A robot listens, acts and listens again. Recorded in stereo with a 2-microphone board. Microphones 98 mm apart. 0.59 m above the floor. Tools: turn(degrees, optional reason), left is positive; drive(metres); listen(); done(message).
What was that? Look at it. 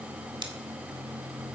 turn(degrees=-55, reason="The scissors: about 55° right or 125° right.")
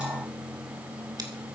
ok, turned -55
listen()
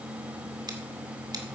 turn(degrees=-55, reason="So it is at 55° right.")
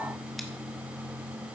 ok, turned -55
listen()
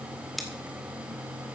done("Found it: scissors, straight ahead, 2 to 4 m away.")